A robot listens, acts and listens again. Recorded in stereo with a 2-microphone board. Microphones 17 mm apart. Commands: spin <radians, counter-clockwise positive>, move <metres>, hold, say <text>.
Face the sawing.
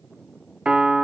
hold
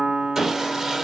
spin -0.44
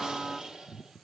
hold
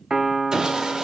spin -2.27
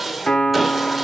spin -0.17
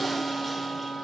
hold
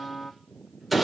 say Facing the sawing.